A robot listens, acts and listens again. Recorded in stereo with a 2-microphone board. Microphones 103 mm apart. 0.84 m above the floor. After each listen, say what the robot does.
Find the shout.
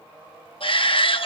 Turn 55° left.
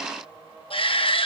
Turn 65° left.
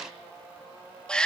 Turn 10° left.
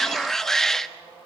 Found it: a shout, straight ahead.